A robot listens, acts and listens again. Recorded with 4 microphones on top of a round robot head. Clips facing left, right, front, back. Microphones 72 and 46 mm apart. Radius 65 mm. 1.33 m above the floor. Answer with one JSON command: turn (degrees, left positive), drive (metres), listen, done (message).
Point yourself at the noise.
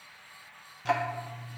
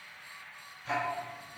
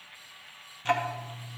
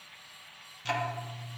{"turn": 65}
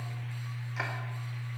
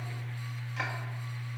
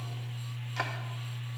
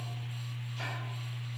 {"turn": 10}
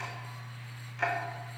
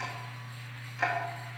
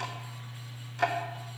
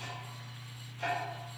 {"done": "Found it: ticking, straight ahead, under 1 m away."}